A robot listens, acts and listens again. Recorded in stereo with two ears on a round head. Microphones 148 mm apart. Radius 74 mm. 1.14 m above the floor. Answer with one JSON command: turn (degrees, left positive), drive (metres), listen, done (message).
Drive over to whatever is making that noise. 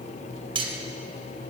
{"turn": -35}
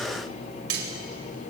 {"turn": -110}
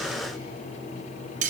{"turn": -50}
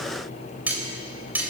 {"turn": -10}
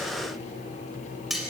{"drive": 1.0}
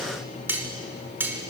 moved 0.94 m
{"turn": -10}
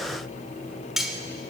{"drive": 1.0}
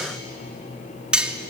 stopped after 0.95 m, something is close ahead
{"done": "I am next to the cutlery clinking."}